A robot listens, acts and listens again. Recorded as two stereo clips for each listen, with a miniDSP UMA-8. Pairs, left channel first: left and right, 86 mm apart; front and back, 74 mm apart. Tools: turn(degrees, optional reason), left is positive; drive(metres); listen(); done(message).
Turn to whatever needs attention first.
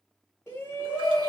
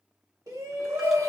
turn(degrees=145, reason="The shout: 145° left.")
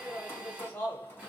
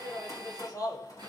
turn(degrees=30, reason="The shout is now 30° left.")
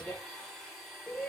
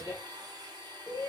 turn(degrees=15, reason="The shout is now 15° left.")
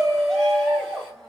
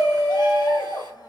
done("Facing the shout.")